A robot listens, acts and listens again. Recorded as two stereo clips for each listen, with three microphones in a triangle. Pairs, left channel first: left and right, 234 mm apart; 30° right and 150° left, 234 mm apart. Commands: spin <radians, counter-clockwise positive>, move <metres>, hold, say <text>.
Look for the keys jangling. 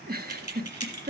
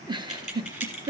spin 0.52
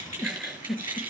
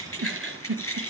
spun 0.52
spin -0.17
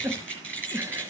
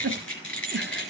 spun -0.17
say Facing the keys jangling.